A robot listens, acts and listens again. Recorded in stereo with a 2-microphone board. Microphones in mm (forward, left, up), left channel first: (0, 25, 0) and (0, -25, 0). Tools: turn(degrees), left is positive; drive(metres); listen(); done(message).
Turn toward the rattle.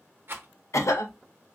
turn(degrees=-50)
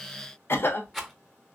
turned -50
done("Found it: a rattle, straight ahead, under 1 m away.")